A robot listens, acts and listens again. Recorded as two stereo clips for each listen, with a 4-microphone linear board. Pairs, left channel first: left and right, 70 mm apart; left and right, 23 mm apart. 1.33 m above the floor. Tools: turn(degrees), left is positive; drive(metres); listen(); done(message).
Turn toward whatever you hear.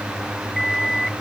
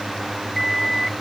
turn(degrees=30)
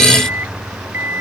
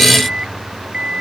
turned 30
turn(degrees=-30)
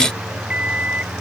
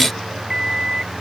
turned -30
turn(degrees=-20)
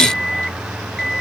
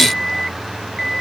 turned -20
done("Found it: an alarm clock, straight ahead.")